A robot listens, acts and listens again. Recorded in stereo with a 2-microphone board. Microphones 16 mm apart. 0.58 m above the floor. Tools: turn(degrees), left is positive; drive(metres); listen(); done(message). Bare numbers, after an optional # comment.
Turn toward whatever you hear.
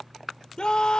# The scream: about 55° left or 125° left.
turn(55)
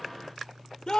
# So it is at 60° left.
turn(60)
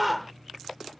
done("Found it: a scream, straight ahead.")